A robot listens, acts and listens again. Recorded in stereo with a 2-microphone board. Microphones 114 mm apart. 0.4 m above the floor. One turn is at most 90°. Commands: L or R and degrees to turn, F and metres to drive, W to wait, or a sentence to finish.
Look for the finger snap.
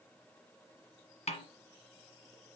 W
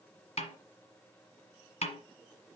W
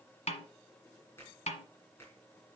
L20
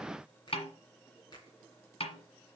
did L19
L90
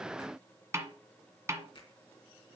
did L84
L55
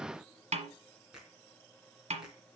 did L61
Facing the finger snap.